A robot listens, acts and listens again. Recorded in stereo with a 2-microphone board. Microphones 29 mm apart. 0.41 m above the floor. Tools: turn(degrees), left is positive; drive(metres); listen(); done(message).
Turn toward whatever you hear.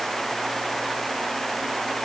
listen()
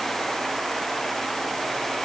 listen()
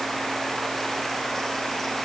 done("I can't make out anything to turn to.")